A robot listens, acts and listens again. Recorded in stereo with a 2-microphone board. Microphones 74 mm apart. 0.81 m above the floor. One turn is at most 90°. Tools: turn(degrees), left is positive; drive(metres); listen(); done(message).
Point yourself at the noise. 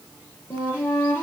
turn(degrees=25)
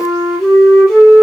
done("Found it: a flute, straight ahead.")